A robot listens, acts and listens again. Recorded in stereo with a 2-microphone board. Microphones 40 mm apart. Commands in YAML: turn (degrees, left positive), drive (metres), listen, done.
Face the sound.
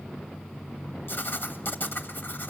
turn: 55
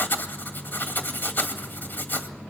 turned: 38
turn: 70
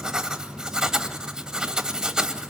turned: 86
turn: -15
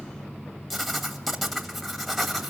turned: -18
done: "Facing the writing, 2 to 4 m away."